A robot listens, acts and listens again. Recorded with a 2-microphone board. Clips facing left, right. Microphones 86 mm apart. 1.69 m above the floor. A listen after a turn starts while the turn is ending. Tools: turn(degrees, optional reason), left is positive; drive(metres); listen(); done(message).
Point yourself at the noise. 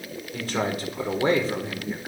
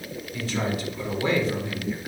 turn(degrees=25, reason="The man speaking: about 25° left or 155° left.")
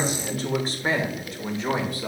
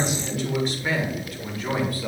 turn(degrees=20, reason="The man speaking: about 20° left or 160° left.")
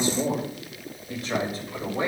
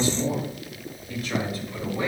turn(degrees=25, reason="The man speaking: about 25° left or 155° left.")
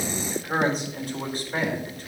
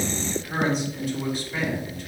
turn(degrees=135, reason="So it is at 135° left.")
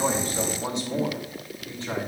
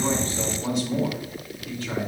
turn(degrees=20, reason="The man speaking is now 20° left.")
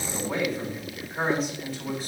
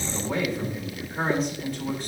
done("Found it: a man speaking, straight ahead, 2 to 4 m away.")